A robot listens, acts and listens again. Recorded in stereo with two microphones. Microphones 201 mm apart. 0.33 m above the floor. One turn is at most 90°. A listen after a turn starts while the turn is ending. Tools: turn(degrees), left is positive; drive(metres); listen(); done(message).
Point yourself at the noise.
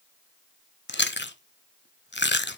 turn(degrees=60)
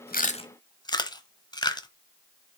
turn(degrees=25)
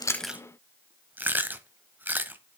turn(degrees=-10)
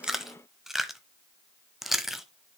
done("Found it: chewing, straight ahead.")